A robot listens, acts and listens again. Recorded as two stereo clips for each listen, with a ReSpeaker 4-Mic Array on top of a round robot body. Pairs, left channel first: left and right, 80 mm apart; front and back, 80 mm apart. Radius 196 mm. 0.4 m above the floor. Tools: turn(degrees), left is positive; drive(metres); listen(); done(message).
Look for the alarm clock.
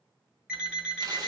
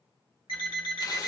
turn(degrees=-10)
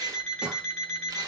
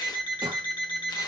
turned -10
done("Found it: an alarm clock, straight ahead, 2 to 4 m away.")